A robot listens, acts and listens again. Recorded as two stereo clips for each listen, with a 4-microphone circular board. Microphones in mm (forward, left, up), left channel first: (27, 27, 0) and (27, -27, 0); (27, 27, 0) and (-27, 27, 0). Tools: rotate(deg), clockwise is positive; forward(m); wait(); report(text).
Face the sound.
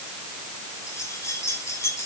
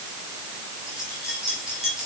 rotate(-100)
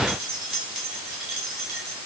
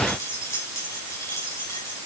rotate(10)
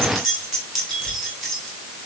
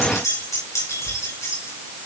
report("Found it: keys jangling, straight ahead, over 4 m away.")